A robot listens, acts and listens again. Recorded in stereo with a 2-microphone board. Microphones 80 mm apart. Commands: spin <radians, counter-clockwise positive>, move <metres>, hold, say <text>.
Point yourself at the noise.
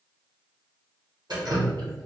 spin -1.05
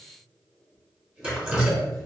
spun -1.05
spin -0.26
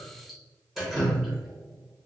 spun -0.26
say Found it: dripping, straight ahead, under 1 m away.